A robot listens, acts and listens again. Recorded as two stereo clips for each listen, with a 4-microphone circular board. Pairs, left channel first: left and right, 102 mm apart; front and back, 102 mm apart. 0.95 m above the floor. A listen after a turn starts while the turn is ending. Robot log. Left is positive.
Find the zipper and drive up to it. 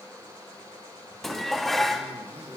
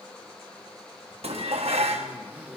note: The zipper: 110° right.
cmd yaw -110
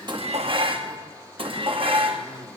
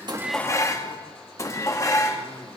note: The zipper is now 15° left.
cmd yaw +15
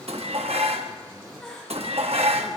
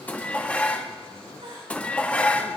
cmd fwd 1.0
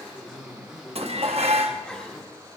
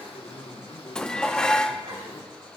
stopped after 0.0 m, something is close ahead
note: The zipper is now 10° right.
cmd yaw -10
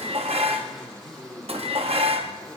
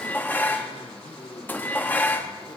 end: Blocked. The zipper is further on, straight ahead.